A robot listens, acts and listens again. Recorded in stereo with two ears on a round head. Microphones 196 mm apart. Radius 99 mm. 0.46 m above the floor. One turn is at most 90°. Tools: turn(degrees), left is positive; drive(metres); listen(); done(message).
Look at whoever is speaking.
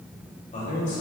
turn(degrees=35)
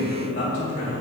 turn(degrees=90)
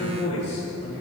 turn(degrees=35)
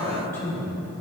turn(degrees=15)
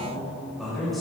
done("Facing the man speaking, 1 to 2 m away.")